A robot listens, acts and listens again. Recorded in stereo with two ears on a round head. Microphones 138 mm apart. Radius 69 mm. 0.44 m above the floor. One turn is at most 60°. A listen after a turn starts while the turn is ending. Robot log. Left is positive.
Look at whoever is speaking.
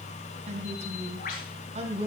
note: The woman speaking: about 40° right or 140° right.
cmd yaw -40
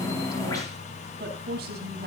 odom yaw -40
note: So it is at 110° right.
cmd yaw -60
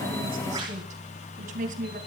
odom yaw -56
note: The woman speaking is now 55° right.
cmd yaw -55
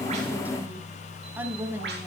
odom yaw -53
note: The woman speaking is now 15° right.
cmd yaw -15
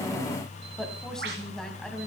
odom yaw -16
end: Found it: a woman speaking, straight ahead, 2 to 4 m away.